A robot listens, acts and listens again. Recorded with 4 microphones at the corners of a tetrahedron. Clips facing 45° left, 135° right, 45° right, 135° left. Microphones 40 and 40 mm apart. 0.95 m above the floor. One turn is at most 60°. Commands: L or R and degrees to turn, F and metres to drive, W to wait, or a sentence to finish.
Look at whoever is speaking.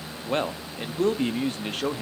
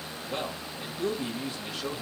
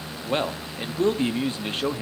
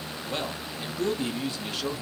L10
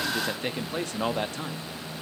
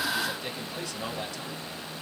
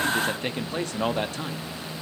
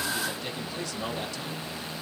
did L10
Facing the man speaking, 1 to 2 m away.